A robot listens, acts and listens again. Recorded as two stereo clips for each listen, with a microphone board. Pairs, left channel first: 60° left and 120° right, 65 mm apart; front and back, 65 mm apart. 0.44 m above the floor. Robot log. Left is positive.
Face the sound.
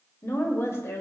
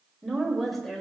note: The woman speaking: 80° left.
cmd yaw +80
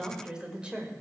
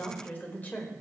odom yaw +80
note: The woman speaking is now 60° right.
cmd yaw -60
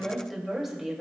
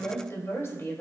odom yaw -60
note: The woman speaking is now 40° right.
cmd yaw -40
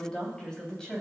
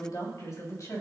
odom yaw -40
note: The woman speaking is now 20° right.
cmd yaw -20
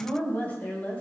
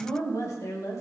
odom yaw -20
end: Found it: a woman speaking, straight ahead.